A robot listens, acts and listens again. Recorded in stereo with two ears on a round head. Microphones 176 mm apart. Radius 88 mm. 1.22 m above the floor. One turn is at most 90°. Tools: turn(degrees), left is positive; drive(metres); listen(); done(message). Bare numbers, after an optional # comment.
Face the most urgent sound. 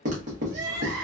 # The crying: about 60° right or 120° right.
turn(-60)
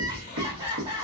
# So it is at 25° right.
turn(-25)
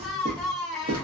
done("Found it: crying, straight ahead, 1 to 2 m away.")